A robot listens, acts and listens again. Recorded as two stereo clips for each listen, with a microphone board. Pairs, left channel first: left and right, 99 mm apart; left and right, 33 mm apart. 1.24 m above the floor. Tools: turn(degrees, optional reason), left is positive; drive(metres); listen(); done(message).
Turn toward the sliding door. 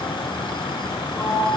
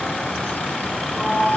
turn(degrees=-30)
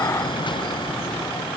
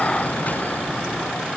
listen()
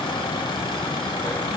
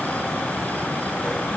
listen()
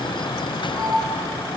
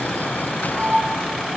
turn(degrees=25, reason="So it is at 25° left.")
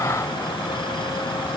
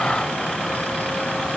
listen()
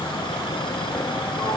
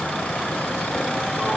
listen()
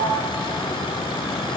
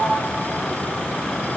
done("Found it: a sliding door, straight ahead, over 4 m away.")